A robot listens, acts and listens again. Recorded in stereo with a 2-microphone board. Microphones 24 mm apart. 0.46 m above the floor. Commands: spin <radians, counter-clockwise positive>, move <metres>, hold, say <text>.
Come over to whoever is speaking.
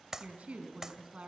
spin -1.13
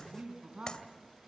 spin -0.87
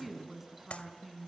move 1.0
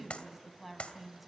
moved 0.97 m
move 1.0
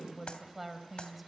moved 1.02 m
spin -0.17
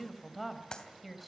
move 1.0
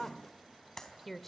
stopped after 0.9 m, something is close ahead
spin 0.17
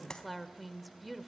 say I am next to the woman speaking.